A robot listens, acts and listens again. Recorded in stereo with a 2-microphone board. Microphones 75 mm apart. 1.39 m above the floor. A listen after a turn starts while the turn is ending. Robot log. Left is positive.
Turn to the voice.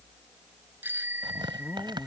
note: The man speaking: about 20° left or 160° left.
cmd yaw +20
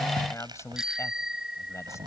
note: The man speaking: about 40° left or 140° left.
cmd yaw +40
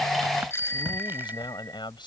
note: So it is at 95° left.
cmd yaw +95
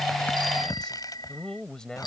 note: The man speaking is now 10° left.
cmd yaw +10
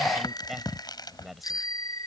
end: Facing the man speaking.